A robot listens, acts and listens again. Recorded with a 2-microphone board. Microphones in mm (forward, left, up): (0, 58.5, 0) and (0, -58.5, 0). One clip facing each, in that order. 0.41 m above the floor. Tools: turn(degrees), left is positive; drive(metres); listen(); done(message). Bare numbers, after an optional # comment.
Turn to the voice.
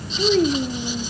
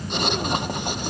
# The child speaking: about 60° left or 120° left.
turn(60)
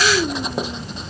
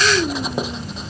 done("Found it: a child speaking, straight ahead.")